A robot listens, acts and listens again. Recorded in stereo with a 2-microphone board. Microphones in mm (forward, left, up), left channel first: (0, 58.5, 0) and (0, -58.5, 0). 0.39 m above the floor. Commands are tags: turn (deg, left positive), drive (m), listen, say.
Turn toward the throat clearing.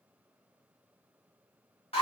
<listen/>
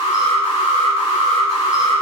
<listen/>
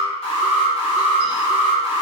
<say>I can't make out throat clearing, only an alarm.</say>